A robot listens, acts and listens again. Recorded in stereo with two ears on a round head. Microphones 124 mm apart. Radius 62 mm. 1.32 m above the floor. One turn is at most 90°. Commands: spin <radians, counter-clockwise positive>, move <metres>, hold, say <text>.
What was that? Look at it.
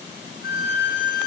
spin 1.57
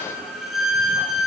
say Facing the violin.